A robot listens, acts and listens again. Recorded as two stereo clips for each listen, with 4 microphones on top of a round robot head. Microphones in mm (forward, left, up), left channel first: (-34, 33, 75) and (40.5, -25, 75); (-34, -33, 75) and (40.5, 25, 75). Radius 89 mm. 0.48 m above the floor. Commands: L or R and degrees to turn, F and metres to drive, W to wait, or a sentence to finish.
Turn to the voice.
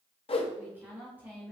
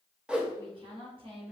L30
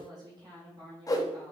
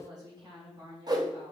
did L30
Found it: a woman speaking, straight ahead, 2 to 4 m away.